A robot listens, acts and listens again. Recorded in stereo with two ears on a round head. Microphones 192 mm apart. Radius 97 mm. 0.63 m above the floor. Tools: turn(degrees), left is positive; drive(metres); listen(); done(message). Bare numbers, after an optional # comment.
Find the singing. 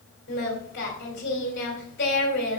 # The singing: about 55° left or 125° left.
turn(55)
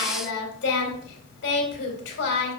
# So it is at 65° left.
turn(65)
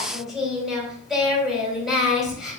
done("Found it: singing, straight ahead, 2 to 4 m away.")